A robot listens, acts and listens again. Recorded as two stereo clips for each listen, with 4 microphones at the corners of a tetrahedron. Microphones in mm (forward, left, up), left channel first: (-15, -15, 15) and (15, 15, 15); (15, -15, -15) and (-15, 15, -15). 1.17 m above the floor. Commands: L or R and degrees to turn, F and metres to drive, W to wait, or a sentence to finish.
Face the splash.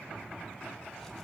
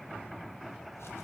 W
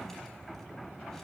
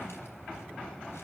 W
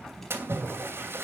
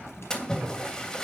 L30
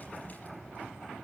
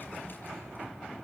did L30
Facing where the splash came from. I can't hear it now.